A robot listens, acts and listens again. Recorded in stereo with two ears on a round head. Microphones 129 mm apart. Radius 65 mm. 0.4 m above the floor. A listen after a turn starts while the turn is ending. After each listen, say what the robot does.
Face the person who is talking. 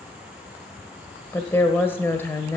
Turn 15° left.
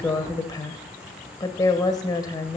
Turn 150° left.
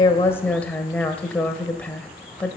Turn 10° left.
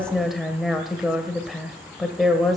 Found it: a woman speaking, straight ahead, 1 to 2 m away.